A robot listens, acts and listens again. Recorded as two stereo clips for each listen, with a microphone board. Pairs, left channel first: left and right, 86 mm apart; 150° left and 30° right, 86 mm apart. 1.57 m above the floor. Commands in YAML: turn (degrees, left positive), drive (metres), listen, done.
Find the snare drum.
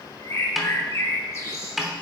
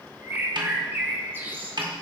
done: "Found it: a snare drum, straight ahead, under 1 m away."